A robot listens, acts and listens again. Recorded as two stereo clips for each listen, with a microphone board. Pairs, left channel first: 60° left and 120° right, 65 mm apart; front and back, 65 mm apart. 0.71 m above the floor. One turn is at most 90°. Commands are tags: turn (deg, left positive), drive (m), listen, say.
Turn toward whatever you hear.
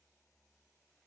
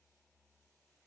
<listen/>
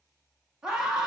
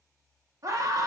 <turn deg="90"/>
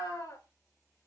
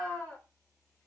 <turn deg="70"/>
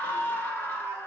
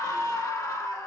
<say>Found it: a scream, straight ahead.</say>